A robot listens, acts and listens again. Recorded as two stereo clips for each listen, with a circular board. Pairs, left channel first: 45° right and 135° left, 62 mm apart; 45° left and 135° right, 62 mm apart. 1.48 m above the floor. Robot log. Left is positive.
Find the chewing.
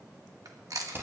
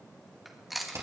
note: The chewing: 135° left.
cmd yaw +135
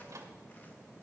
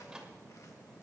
cmd idle
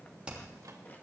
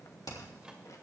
cmd idle
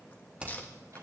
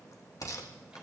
end: I heard chewing from this way, but can't make it out now.